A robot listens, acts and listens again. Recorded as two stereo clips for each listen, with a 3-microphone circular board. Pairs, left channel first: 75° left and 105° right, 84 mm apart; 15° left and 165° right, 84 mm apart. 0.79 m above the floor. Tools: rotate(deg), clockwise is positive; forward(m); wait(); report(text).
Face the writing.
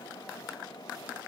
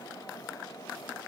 wait()
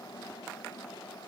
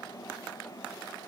wait()
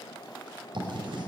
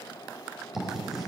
rotate(80)
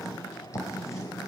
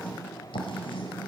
rotate(-20)
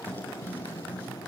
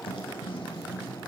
report("Facing the writing, over 4 m away.")